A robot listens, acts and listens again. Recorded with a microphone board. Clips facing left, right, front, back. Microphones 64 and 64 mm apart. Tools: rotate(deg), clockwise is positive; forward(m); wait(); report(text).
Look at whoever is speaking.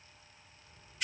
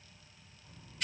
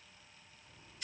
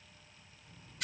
rotate(110)
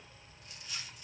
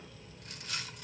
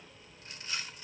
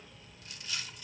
rotate(-20)
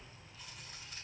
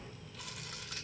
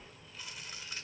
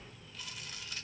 rotate(-10)
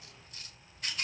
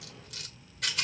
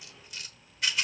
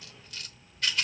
report("Found it: a child speaking, straight ahead, over 4 m away.")